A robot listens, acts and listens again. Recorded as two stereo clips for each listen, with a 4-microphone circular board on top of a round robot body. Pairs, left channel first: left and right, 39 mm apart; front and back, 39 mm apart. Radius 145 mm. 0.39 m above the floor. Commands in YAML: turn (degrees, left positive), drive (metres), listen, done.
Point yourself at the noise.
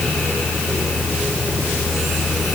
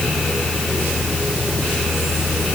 listen: true
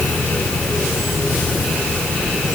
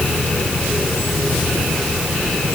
listen: true
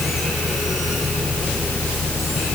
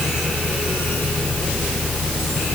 done: "I can't make out anything to turn to."